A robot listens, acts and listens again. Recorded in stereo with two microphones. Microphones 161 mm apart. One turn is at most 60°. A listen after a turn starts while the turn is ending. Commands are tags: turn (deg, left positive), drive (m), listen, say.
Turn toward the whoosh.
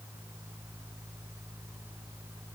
<listen/>
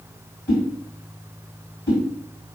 <turn deg="15"/>
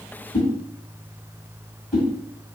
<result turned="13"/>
<say>Found it: a whoosh, straight ahead.</say>